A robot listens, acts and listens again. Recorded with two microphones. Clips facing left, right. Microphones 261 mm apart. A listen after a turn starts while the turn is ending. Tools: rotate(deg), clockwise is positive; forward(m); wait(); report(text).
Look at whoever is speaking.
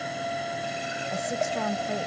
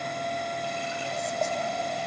rotate(-90)
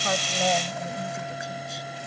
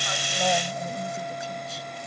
wait()
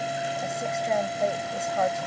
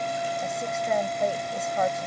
report("Found it: a woman speaking, straight ahead.")